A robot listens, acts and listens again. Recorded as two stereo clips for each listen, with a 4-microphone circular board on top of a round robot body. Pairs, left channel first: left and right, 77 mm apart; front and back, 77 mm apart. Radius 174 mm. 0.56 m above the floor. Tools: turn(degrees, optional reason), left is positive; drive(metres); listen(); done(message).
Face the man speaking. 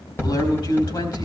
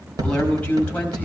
turn(degrees=75, reason="The man speaking: 75° left.")
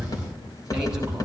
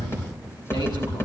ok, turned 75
listen()
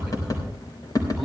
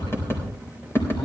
listen()
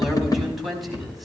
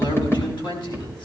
done("Facing the man speaking.")